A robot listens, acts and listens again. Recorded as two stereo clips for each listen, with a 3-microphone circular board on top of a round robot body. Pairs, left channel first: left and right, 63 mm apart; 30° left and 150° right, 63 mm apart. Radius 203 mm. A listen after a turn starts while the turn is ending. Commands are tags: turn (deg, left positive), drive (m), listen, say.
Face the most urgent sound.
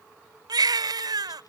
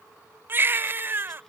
<turn deg="-90"/>
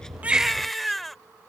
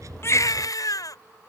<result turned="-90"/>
<say>Found it: a baby crying, straight ahead.</say>